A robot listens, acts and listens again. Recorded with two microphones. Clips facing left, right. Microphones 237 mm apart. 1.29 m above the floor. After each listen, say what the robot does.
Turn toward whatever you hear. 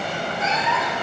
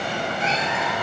Turn 35° right.
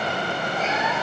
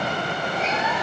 Keep listening.
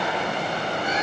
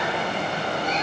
Keep listening.
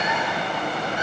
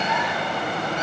Turn 10° left.
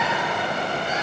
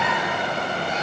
Found it: a cat meowing, straight ahead, over 4 m away.